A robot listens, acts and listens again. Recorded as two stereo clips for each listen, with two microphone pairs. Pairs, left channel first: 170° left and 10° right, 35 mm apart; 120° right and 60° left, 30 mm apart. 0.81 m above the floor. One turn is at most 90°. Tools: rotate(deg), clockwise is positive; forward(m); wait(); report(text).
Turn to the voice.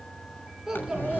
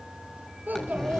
rotate(-70)
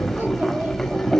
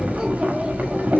wait()
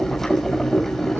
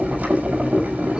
wait()
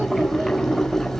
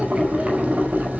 report("Facing where the child speaking came from. I can't hear it now.")